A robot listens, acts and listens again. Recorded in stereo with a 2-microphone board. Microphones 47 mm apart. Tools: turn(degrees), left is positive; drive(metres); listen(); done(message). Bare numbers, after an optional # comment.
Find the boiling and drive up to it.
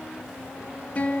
listen()
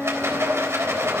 listen()
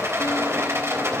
done("I can't make out boiling to turn to.")